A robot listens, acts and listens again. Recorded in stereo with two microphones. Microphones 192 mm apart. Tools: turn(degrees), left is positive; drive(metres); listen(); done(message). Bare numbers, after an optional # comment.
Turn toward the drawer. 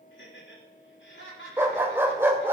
listen()
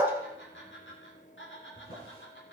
# The drawer: about 55° left or 125° left.
turn(55)
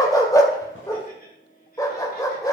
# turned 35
listen()
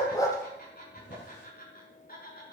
# So it is at 90° left.
turn(90)
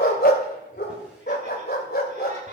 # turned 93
listen()
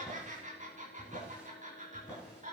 done("Found it: a drawer, straight ahead, over 4 m away.")